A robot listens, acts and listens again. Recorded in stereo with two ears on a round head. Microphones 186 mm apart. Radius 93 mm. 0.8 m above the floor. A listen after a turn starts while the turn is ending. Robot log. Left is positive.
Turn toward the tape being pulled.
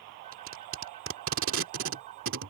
note: The tape being pulled: about 70° right or 110° right.
cmd yaw -70
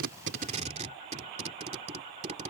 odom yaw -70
note: So it is at 35° right.
cmd yaw -35
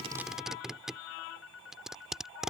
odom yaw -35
end: Found it: tape being pulled, straight ahead.